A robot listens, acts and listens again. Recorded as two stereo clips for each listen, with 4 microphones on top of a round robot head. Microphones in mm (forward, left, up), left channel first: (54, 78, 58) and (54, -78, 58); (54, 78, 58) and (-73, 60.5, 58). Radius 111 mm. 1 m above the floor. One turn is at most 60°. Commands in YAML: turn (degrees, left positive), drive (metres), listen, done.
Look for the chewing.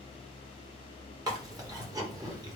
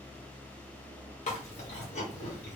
turn: -25
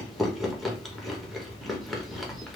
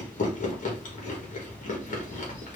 done: "Found it: chewing, straight ahead, 1 to 2 m away."